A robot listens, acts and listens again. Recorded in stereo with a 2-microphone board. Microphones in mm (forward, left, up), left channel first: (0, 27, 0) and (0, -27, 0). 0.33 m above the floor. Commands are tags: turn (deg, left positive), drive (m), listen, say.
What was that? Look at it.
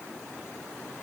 <listen/>
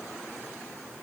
<listen/>
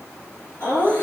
<turn deg="45"/>
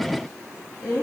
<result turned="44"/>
<turn deg="95"/>
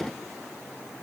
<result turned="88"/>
<turn deg="10"/>
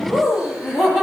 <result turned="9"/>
<say>Facing the laughter, over 4 m away.</say>